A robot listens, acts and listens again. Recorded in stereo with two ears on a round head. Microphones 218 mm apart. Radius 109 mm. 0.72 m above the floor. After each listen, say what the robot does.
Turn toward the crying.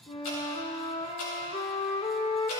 Keep listening.
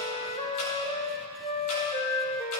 Keep listening.
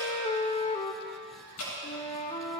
I can't make out crying to turn to.